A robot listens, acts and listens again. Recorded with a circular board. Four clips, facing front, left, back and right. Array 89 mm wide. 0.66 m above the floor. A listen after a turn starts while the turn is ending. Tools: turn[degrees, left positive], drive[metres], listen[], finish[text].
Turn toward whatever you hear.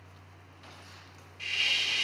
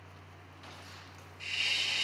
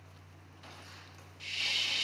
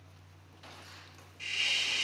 Thought: The hiss: 20° right.
Action: turn[-20]
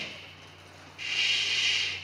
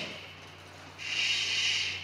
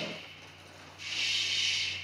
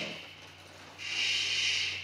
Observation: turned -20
Action: finish[Facing the hiss.]